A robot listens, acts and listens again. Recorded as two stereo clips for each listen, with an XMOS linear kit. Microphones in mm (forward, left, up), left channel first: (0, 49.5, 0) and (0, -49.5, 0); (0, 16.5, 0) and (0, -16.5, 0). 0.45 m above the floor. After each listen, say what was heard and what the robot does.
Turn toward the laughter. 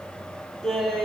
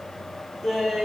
Turn 30° left.
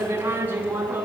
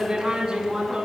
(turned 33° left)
So it is at 15° right. Turn 15° right.
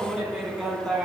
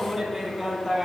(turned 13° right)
Facing the laughter.